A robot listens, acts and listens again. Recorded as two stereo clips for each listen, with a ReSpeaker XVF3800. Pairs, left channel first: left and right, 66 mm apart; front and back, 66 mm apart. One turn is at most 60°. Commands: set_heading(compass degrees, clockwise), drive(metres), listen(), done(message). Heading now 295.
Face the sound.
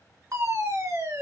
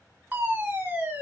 set_heading(355)
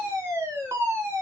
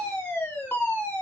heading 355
set_heading(50)
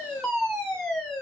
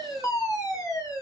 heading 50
done("Facing the fire alarm, 2 to 4 m away.")